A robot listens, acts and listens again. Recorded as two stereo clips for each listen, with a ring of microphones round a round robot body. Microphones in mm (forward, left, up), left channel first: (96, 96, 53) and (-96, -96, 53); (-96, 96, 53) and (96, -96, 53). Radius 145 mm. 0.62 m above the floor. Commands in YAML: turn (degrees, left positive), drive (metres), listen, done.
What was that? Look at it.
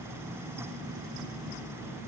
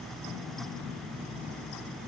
listen: true
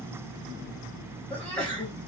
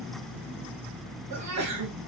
turn: -40
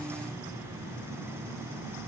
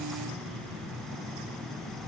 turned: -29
turn: -10
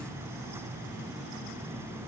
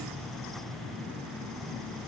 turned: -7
done: "Facing where the sneeze came from. I can't hear it now."